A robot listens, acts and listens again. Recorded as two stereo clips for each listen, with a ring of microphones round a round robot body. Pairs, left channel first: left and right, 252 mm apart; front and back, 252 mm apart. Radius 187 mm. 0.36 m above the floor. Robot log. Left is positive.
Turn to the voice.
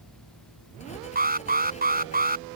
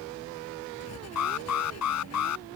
cmd idle
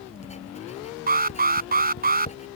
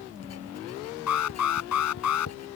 cmd idle
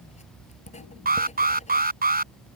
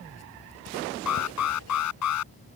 end: I can't make out anyone speaking to turn to.